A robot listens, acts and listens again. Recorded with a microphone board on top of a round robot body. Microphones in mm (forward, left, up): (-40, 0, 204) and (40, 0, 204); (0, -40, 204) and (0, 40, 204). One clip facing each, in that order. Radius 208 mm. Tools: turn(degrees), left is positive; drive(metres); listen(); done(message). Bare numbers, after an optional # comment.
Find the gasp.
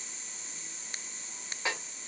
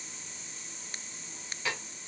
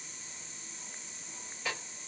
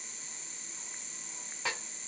listen()
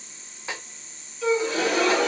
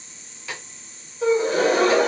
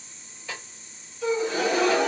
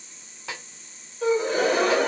# The gasp: 45° left.
turn(45)
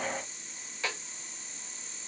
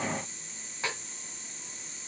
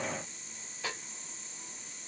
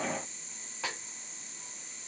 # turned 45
done("Facing where the gasp came from. I can't hear it now.")